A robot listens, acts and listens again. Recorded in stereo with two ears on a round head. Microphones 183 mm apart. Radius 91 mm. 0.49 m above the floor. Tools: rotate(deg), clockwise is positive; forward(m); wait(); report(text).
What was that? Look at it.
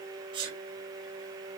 rotate(25)
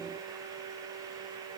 wait()
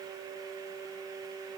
report("I heard a sneeze, but can't make it out now. It was about straight ahead or 130° right.")